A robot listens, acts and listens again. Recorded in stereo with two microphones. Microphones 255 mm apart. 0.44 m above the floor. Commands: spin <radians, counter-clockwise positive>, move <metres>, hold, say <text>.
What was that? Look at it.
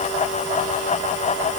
hold
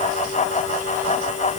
hold
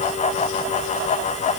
say I can't make out anything to turn to.